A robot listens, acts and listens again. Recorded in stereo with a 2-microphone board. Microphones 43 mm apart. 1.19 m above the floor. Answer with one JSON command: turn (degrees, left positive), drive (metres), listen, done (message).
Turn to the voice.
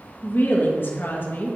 {"turn": 50}
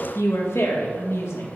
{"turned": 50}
{"turn": 80}
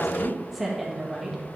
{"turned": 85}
{"done": "Found it: a woman speaking, straight ahead."}